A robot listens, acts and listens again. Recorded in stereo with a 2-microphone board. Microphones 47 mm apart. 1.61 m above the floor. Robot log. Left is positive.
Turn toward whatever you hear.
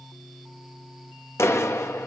note: The clap: about 75° left or 105° left.
cmd yaw +75
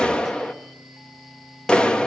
note: So it is at 25° left.
cmd yaw +25
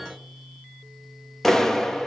note: The clap is now 10° left.
cmd yaw +10
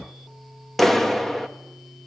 end: Found it: a clap, straight ahead.